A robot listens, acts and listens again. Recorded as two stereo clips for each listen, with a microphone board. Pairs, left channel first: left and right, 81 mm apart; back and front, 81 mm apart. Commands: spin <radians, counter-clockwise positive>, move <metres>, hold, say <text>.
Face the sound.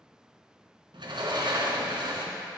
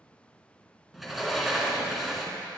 spin -1.57
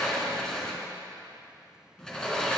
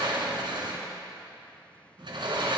spin 0.17
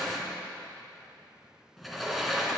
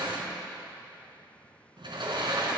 say Facing the sliding door.